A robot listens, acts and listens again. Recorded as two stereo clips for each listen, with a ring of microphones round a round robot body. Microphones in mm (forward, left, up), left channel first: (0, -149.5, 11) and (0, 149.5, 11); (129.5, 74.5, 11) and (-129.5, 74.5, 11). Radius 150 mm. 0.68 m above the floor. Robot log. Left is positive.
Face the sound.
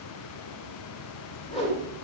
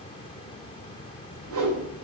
note: The whoosh: 160° right.
cmd yaw -160
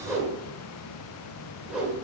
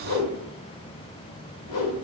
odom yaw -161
end: Found it: a whoosh, straight ahead.